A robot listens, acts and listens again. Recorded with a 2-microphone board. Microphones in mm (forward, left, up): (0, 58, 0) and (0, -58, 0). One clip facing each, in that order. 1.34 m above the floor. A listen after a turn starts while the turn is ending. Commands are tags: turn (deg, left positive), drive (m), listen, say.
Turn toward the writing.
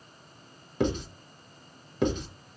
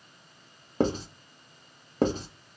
<turn deg="-40"/>
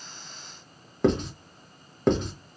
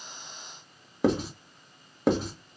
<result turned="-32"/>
<say>Facing the writing, under 1 m away.</say>